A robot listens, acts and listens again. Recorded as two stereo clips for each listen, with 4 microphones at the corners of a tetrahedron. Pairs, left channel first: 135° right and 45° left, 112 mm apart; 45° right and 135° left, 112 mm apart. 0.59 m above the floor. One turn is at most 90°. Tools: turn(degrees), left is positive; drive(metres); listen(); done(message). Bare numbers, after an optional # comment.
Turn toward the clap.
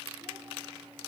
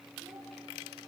listen()
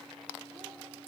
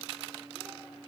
listen()
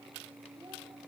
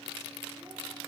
done("I can't make out a clap to turn to.")